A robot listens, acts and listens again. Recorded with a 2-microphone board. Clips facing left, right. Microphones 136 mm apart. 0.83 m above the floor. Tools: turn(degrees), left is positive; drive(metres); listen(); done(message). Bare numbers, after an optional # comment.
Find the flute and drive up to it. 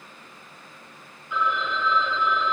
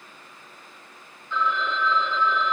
listen()
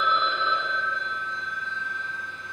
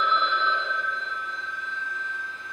# The flute: about 70° left or 110° left.
turn(70)
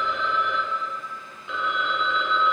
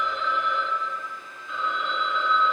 listen()
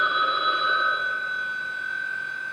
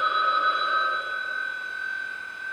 drive(1.0)
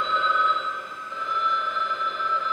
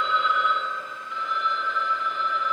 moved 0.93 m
listen()
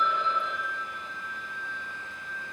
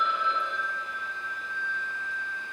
drive(1.0)
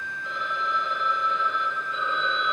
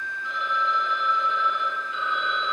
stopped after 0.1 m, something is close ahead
done("Arrived at the flute, straight ahead.")